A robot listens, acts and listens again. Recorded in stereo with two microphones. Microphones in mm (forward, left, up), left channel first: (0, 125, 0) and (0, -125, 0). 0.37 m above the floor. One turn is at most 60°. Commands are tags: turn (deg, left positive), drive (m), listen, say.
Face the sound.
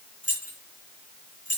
<turn deg="60"/>
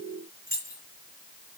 <turn deg="35"/>
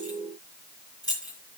<turn deg="15"/>
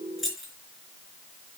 <say>Found it: keys jangling, straight ahead, 2 to 4 m away.</say>